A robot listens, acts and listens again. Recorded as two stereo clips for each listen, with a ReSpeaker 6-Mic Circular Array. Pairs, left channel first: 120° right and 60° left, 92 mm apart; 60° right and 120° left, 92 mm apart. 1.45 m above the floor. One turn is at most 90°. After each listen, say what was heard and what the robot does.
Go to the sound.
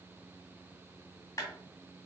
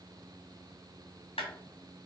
The clap: 65° right. Turn 65° right.
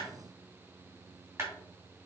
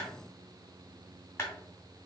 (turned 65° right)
Drive 1.0 m forward.
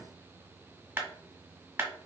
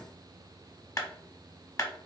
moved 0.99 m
The clap is now 10° right. Turn 10° right.
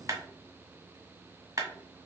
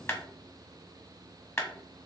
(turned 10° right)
Drive 1.0 m forward.
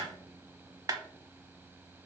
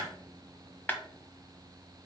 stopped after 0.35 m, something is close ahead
The clap is now 10° left. Turn 10° left.
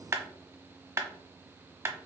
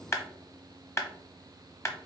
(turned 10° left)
I am next to the clap.